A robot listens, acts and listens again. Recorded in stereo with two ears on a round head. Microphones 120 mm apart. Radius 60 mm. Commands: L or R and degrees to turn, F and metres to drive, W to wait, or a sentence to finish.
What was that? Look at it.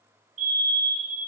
R55
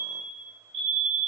R60
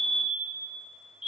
Facing the fire alarm, 2 to 4 m away.